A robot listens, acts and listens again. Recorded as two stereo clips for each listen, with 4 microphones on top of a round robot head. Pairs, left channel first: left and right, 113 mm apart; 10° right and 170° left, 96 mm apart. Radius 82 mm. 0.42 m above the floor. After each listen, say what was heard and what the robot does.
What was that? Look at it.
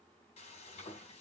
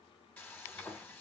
The frying: 60° left. Turn 60° left.
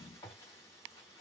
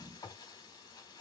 The frying is now 25° left. Turn 25° left.
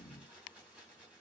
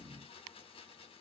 The frying is now 10° right. Turn 10° right.
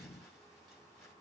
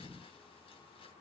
Keep listening.
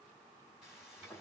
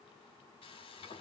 Found it: frying, straight ahead.